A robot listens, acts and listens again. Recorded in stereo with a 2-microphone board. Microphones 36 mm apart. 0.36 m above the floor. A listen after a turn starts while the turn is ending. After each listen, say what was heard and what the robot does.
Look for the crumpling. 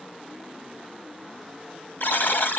Keep listening.
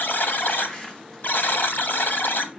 Turn 30° left.
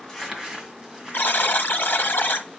So it is at 15° right. Turn 15° right.
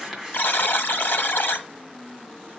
The crumpling is now 10° right. Turn 10° right.
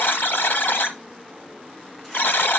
Keep listening.
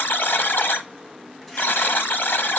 Keep listening.
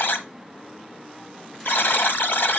Facing where the crumpling came from. I can't hear it now.